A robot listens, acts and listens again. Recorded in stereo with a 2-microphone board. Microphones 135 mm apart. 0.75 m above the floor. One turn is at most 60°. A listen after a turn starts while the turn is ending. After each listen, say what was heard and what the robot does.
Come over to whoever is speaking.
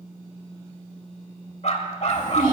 The child speaking: about 75° right or 105° right. Turn 60° right.
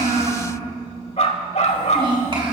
So it is at 40° right. Turn 40° right.
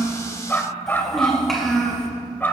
Drive 1.0 m forward.
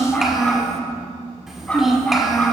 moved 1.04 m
Drive 1.0 m forward.
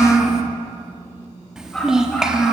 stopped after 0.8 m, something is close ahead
Arrived at the child speaking, straight ahead.